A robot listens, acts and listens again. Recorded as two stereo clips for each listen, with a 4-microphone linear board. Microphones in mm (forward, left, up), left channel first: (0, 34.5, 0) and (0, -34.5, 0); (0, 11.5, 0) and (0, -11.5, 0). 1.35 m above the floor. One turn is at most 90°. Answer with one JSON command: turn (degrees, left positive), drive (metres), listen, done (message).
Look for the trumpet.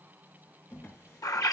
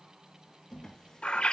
{"listen": true}
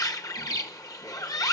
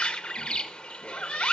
{"listen": true}
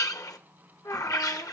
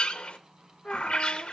{"turn": 90}
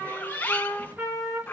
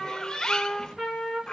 {"turn": -10}
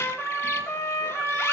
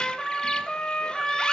{"done": "Facing the trumpet, over 4 m away."}